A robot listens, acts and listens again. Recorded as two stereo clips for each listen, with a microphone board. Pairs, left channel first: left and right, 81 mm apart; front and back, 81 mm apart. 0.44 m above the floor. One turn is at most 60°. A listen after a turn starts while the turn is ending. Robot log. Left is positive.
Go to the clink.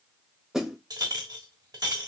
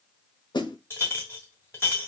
note: The clink: 55° right.
cmd yaw -55
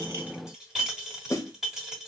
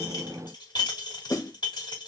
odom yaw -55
cmd fwd 1.0
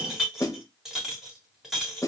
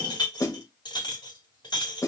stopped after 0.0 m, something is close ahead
end: Blocked. The clink is further on, straight ahead.